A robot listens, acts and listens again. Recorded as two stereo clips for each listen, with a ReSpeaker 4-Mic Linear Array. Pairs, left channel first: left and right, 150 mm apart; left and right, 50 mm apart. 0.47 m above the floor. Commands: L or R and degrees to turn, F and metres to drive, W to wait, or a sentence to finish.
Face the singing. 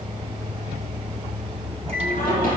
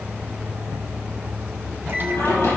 L70
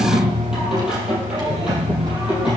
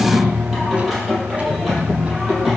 Facing the singing.